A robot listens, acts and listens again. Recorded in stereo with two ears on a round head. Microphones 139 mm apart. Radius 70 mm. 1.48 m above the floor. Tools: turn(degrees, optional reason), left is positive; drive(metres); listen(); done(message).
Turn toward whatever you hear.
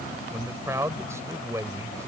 turn(degrees=-15, reason="The man speaking: about 15° right or 165° right.")
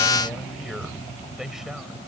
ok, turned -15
turn(degrees=30)
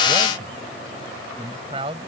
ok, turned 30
turn(degrees=-35, reason="So it is at 35° right.")
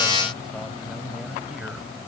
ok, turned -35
listen()
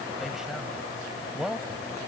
done("Facing the man speaking.")